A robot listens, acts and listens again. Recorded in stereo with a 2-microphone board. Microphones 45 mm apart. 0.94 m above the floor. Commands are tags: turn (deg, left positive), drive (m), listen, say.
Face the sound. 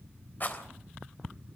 <turn deg="40"/>
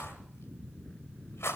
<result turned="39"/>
<turn deg="100"/>
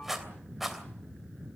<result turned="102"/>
<say>Found it: a rattle, straight ahead, 2 to 4 m away.</say>